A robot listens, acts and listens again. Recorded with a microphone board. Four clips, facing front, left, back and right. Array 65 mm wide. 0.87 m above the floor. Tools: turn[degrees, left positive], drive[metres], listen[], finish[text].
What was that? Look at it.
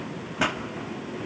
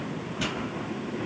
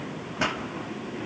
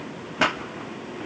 Thought: The pop: 80° right.
Action: turn[-80]
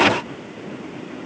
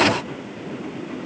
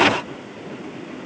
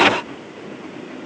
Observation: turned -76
Action: finish[I heard a pop from this way, but can't make it out now.]